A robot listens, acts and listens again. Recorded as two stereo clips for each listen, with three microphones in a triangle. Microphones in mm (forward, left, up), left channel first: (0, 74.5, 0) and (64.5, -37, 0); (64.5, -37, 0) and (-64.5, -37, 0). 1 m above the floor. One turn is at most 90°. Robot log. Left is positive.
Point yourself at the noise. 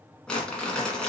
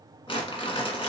note: The crumpling: 35° left.
cmd yaw +35
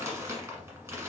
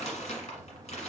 end: Facing the crumpling, 1 to 2 m away.